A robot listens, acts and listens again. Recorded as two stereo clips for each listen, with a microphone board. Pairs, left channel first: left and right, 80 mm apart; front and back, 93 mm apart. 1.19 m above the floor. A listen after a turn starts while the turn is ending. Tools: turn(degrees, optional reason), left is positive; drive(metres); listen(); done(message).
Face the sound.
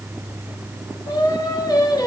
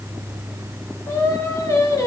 turn(degrees=55, reason="The singing: 55° left.")
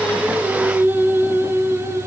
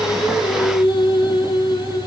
turn(degrees=-35, reason="The singing is now 35° right.")
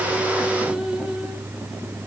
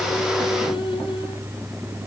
listen()
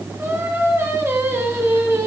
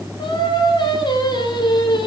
turn(degrees=-35, reason="The singing is now 35° right.")
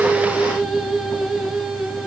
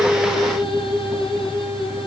done("Facing the singing, 2 to 4 m away.")